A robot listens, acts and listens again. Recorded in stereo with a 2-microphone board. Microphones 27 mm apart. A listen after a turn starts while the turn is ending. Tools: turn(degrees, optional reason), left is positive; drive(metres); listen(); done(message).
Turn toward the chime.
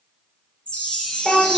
turn(degrees=40, reason="The chime: about 40° left or 140° left.")
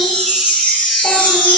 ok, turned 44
turn(degrees=90, reason="So it is at 90° left.")
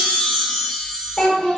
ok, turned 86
done("Found it: a chime, straight ahead.")